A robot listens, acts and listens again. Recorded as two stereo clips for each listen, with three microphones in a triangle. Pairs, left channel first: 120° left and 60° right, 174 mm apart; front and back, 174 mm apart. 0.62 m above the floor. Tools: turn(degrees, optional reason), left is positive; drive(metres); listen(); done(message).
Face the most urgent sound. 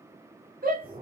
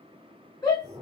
turn(degrees=-65, reason="The shout: 65° right.")
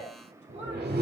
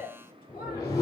turn(degrees=-20, reason="The shout is now 20° right.")
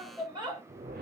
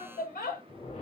done("Found it: a shout, straight ahead, 1 to 2 m away.")